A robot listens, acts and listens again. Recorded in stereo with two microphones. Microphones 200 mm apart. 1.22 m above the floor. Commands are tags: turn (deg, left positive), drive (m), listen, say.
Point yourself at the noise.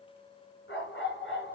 <turn deg="70"/>
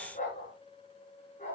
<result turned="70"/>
<turn deg="40"/>
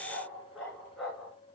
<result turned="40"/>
<say>Found it: a dog barking, straight ahead.</say>